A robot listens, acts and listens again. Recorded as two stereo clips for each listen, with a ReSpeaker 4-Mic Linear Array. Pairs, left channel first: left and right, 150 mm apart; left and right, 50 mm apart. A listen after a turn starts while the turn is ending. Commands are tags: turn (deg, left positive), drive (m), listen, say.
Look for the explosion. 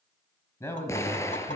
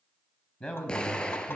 <turn deg="20"/>
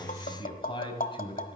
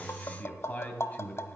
<listen/>
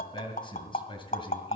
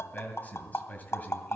<say>I heard an explosion, but can't make it out now. It was about straight ahead or 140° left.</say>